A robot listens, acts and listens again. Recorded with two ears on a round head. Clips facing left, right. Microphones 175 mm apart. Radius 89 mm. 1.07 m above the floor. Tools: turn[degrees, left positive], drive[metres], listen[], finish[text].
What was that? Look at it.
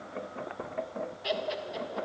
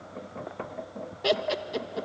Thought: The laughter: about 60° right or 120° right.
Action: turn[-60]
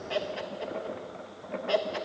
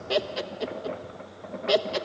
Thought: So it is at 50° right.
Action: turn[-50]
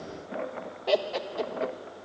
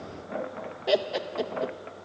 Action: finish[Found it: laughter, straight ahead, 1 to 2 m away.]